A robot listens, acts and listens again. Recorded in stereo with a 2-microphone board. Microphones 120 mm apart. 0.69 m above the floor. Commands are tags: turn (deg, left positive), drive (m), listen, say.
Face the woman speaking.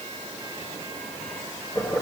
<listen/>
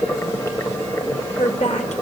<turn deg="70"/>
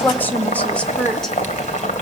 <say>Facing the woman speaking, 1 to 2 m away.</say>